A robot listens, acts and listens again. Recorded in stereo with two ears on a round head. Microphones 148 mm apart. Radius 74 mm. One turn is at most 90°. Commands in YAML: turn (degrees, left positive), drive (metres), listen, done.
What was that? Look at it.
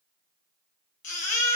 turn: 50
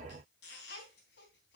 listen: true
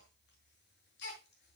turn: 75
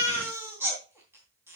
turn: -15
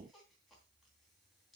listen: true
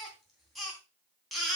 done: "Found it: a baby crying, straight ahead, 2 to 4 m away."